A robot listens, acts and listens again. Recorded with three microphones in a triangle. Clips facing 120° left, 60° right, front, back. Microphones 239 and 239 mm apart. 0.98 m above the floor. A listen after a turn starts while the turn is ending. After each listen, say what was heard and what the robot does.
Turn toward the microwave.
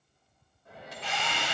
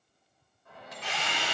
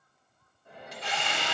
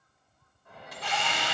The microwave: 60° left. Turn 60° left.
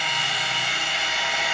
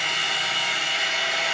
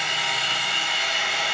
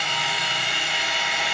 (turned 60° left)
Keep listening.
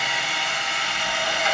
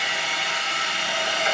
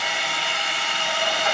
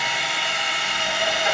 Keep listening.
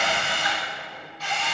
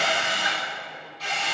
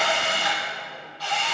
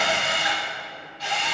Facing where the microwave came from. I can't hear it now.